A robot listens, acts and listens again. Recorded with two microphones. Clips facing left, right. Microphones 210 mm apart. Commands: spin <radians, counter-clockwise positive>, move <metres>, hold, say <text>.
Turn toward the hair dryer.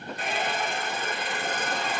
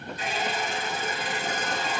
spin 0.96
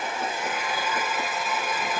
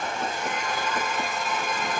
say Facing the hair dryer, 2 to 4 m away.